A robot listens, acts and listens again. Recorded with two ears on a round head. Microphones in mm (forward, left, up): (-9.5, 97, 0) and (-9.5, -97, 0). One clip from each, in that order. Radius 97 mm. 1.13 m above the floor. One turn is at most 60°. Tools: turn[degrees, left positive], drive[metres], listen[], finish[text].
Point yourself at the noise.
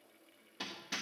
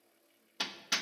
Thought: The hammering: about 45° right or 135° right.
Action: turn[-45]
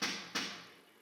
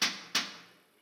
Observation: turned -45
Thought: So it is at 85° right.
Action: turn[-60]
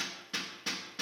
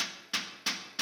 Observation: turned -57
Thought: The hammering is now 30° right.
Action: turn[-30]
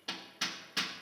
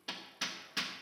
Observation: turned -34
Action: finish[Facing the hammering, 1 to 2 m away.]